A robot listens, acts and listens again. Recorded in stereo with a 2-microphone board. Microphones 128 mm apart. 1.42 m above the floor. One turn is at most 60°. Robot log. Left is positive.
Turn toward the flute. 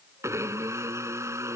cmd idle
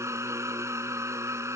cmd idle
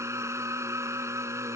end: I can't make out a flute, only a blender.